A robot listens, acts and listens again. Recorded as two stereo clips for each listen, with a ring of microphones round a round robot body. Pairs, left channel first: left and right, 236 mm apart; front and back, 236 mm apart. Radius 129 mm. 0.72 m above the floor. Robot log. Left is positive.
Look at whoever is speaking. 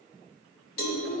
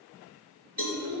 note: The child speaking: 145° left.
cmd yaw +145
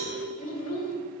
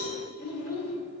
note: The child speaking is now 35° left.
cmd yaw +35
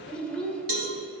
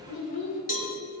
end: Found it: a child speaking, straight ahead, 2 to 4 m away.